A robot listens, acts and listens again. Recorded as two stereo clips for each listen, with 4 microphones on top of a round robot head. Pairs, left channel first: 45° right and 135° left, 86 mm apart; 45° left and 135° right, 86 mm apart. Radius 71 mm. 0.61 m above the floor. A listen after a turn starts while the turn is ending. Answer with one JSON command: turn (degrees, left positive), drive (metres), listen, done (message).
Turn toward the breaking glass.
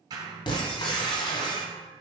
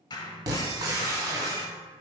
{"turn": -80}
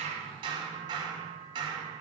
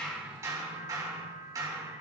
{"done": "I heard breaking glass from this way, but can't make it out now."}